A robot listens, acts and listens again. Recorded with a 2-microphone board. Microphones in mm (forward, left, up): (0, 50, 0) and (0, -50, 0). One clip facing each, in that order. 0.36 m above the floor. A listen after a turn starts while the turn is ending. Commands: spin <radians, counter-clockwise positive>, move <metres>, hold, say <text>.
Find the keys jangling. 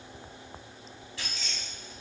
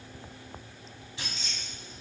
spin -0.44
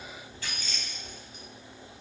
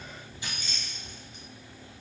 spin -0.44
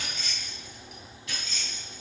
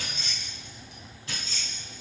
spin -0.70
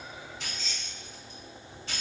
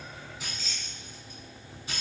spin -0.17
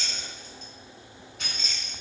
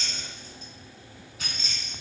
say Facing the keys jangling.